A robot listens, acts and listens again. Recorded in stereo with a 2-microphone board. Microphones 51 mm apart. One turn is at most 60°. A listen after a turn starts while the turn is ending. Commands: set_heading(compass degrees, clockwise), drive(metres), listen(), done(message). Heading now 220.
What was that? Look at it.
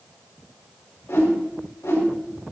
set_heading(160)
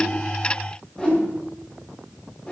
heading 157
set_heading(132)
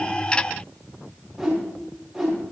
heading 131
done("Found it: a whoosh, straight ahead, over 4 m away.")